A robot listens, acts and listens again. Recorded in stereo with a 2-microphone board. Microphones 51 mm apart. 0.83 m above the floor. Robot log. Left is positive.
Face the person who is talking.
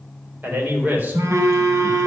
note: The man speaking: about 35° right or 145° right.
cmd yaw -35
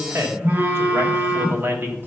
note: The man speaking: about 45° right or 135° right.
cmd yaw -45
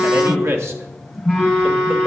note: So it is at 125° right.
cmd yaw -125
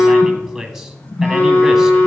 end: Found it: a man speaking, straight ahead.